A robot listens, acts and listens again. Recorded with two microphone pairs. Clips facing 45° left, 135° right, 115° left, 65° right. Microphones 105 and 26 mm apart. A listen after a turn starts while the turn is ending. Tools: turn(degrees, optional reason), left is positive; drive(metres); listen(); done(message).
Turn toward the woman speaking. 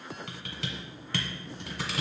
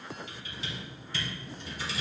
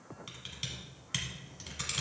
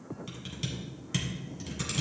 listen()
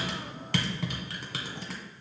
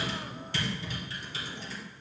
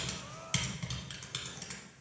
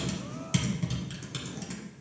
listen()
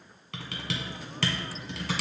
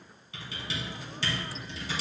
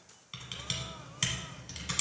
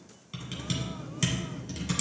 done("I can't make out a woman speaking, only typing on a keyboard.")